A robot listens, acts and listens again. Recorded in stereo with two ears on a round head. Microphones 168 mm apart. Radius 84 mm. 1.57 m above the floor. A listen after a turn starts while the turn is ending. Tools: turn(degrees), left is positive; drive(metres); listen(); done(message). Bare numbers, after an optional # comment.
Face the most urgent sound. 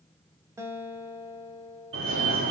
# The fire alarm: about 75° right or 105° right.
turn(-75)
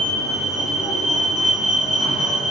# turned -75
done("Found it: a fire alarm, straight ahead, 2 to 4 m away.")